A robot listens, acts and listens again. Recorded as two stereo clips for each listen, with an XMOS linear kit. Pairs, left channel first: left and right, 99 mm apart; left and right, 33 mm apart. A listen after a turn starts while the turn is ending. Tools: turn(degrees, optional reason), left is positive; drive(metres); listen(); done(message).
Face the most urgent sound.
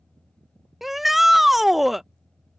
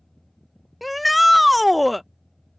turn(degrees=30)
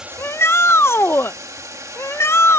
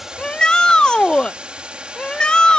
turn(degrees=155, reason="So it is at 155° left.")
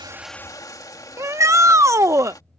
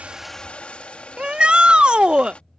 turn(degrees=-30, reason="The shout is now 30° right.")
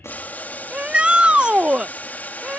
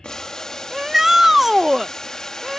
turn(degrees=-10, reason="The shout is now 10° right.")
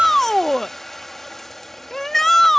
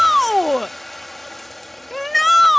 done("Facing the shout.")